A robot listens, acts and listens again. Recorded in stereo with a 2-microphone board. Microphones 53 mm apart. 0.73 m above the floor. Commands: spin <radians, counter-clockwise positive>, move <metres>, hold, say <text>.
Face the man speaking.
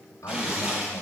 spin 1.22
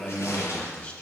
spin 0.52
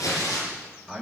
say Found it: a man speaking, straight ahead, over 4 m away.